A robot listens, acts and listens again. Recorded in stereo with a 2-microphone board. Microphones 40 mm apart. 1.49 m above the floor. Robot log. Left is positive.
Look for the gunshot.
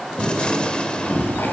note: The gunshot: about 25° left or 155° left.
cmd yaw +25
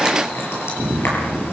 cmd idle
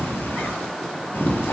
end: I heard a gunshot, but can't make it out now. It was about straight ahead or 130° left.